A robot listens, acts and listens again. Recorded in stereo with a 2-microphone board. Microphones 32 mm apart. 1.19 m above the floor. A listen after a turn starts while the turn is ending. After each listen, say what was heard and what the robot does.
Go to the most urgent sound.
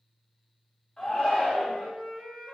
The shout: about 20° left or 160° left. Turn 20° left.
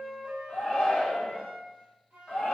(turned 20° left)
So it is at 140° left. Turn 140° left.
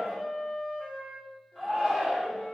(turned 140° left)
Drive 1.0 m forward.
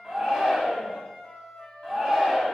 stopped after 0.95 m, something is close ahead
Arrived at the shout, straight ahead.